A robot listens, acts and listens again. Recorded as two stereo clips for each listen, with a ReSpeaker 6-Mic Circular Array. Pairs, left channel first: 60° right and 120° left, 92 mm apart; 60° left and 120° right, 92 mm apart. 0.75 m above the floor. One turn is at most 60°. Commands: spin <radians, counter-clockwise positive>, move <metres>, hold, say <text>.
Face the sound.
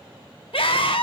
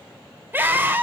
spin -0.87
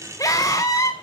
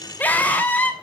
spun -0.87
spin -0.17
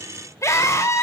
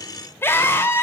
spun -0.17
say Found it: a scream, straight ahead, 2 to 4 m away.